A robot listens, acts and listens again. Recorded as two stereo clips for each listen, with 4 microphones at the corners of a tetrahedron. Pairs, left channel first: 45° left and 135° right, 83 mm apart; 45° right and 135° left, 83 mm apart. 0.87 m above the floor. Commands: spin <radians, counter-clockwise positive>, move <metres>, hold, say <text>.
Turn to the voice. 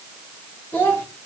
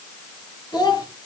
spin -0.26
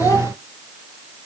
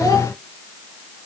hold
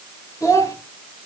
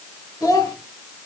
say Found it: a child speaking, straight ahead, 2 to 4 m away.